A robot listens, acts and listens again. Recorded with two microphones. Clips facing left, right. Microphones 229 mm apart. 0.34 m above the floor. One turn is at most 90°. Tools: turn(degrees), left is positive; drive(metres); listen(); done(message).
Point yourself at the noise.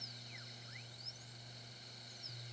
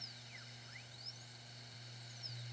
listen()
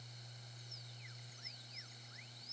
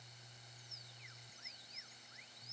listen()
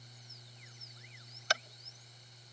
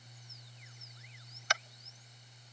turn(degrees=35)
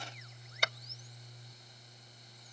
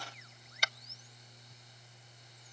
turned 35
turn(degrees=90)
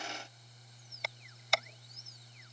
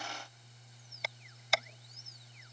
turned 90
done("Found it: tapping, straight ahead.")